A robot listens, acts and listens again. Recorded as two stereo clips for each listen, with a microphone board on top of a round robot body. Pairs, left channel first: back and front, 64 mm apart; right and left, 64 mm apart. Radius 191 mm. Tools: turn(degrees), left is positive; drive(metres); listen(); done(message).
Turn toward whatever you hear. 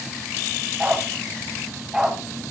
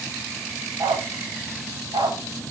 turn(degrees=85)
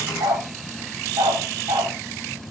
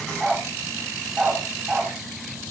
turn(degrees=15)
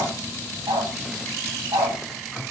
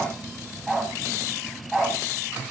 done("Facing the dog barking, 2 to 4 m away.")